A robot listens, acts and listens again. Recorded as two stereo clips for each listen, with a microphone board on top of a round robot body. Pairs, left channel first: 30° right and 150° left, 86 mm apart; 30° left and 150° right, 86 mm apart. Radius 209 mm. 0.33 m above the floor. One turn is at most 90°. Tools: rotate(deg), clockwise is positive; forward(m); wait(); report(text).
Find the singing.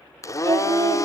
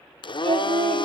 rotate(90)
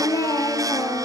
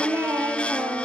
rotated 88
rotate(85)
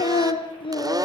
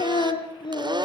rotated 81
report("Found it: singing, straight ahead, 2 to 4 m away.")